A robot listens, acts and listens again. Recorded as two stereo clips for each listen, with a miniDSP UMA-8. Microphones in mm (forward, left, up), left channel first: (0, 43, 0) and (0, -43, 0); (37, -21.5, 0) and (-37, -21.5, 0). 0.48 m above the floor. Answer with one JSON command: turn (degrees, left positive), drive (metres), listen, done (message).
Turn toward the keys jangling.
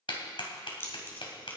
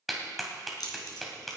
{"turn": 25}
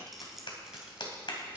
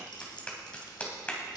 {"done": "Facing the keys jangling."}